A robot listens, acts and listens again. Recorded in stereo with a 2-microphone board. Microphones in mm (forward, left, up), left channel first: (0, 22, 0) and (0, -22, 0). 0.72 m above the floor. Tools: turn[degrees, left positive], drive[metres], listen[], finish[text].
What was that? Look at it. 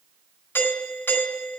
Thought: The doorbell: about 60° left or 120° left.
Action: turn[60]
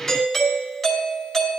Action: finish[Facing the doorbell, over 4 m away.]